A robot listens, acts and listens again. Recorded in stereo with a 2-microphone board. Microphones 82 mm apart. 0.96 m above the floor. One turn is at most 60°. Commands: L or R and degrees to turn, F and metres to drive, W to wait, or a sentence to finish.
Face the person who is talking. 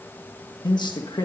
L60
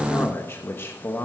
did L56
L35
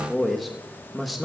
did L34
Facing the man speaking.